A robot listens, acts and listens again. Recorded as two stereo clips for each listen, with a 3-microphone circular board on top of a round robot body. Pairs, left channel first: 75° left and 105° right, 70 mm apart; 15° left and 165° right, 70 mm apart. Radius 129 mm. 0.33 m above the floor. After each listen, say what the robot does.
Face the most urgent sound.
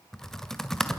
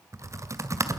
Keep listening.
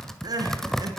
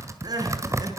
Turn 135° right.
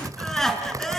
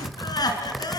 Turn 10° right.
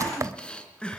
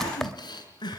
Facing the crying, 2 to 4 m away.